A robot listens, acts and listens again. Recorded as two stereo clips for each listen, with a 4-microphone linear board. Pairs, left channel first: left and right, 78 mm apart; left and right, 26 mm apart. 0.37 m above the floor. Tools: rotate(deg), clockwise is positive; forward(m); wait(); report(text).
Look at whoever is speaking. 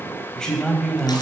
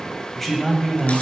rotate(-30)
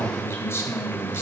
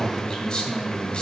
rotate(-140)
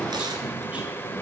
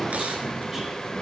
rotate(20)
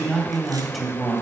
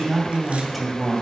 report("Facing the man speaking.")